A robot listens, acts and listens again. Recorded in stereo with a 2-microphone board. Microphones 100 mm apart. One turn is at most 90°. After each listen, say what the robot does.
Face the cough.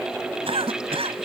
Turn 70° right.
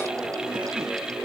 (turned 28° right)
Keep listening.
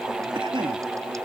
Turn 60° right.
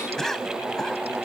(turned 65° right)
Facing the cough.